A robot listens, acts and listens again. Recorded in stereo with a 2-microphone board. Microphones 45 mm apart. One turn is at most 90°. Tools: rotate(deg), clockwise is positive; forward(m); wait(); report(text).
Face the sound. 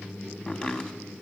rotate(-25)
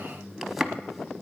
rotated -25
report("Found it: chopping, straight ahead.")